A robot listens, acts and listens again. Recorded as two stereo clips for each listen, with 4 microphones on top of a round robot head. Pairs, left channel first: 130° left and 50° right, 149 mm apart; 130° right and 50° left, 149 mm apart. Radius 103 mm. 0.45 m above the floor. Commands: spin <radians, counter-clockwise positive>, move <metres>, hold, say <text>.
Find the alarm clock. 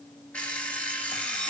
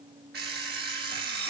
spin 0.87
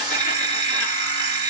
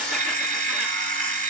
spin 0.26
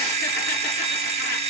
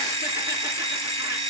say Found it: an alarm clock, straight ahead.